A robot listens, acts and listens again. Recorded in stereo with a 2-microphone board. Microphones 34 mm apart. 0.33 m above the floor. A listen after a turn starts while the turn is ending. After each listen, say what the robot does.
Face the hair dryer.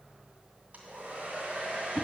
Turn 55° right.
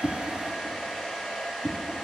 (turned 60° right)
Facing the hair dryer.